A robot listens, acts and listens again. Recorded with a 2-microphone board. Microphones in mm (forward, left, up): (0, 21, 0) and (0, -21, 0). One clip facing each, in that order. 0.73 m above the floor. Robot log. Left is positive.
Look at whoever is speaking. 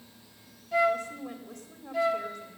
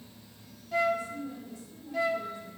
note: The woman speaking: about 60° left or 120° left.
cmd yaw +60
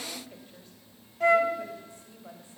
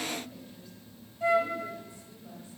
note: So it is at 55° left.
cmd yaw +55
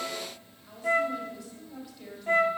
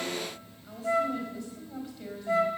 end: Facing the woman speaking, over 4 m away.